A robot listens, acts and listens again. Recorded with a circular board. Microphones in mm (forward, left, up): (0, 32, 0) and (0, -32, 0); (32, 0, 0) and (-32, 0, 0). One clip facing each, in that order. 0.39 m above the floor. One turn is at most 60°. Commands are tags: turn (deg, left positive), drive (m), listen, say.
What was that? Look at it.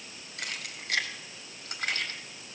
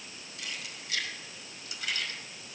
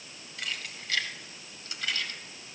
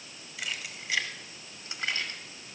<turn deg="60"/>
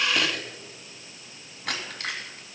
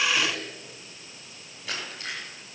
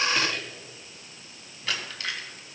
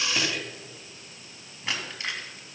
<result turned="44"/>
<turn deg="60"/>
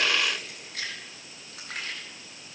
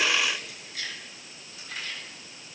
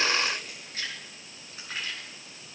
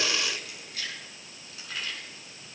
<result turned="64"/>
<turn deg="60"/>
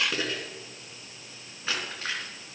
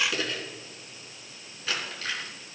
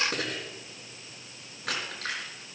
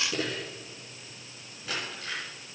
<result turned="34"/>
<turn deg="25"/>
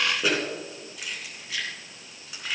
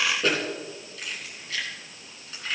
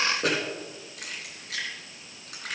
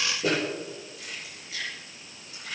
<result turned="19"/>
<say>Found it: keys jangling, straight ahead, 2 to 4 m away.</say>